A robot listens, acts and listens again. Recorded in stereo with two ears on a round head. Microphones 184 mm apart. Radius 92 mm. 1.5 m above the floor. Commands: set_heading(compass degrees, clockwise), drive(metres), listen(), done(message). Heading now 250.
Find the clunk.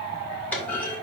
set_heading(220)
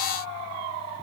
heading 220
listen()
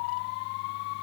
done("I heard a clunk, but can't make it out now. It was about 20° right or 140° left.")